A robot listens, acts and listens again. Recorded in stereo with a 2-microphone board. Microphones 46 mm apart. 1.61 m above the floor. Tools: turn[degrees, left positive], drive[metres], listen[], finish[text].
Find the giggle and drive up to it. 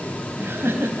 Thought: The giggle: about 50° right or 130° right.
Action: turn[-50]
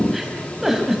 Action: drive[1.0]
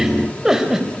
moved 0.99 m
Thought: The giggle is now 10° right.
Action: turn[-10]
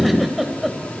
Action: drive[1.0]
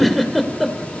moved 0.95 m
Action: drive[1.0]
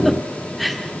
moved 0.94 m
Action: drive[1.0]
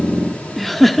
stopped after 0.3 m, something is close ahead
Action: finish[I am next to the giggle.]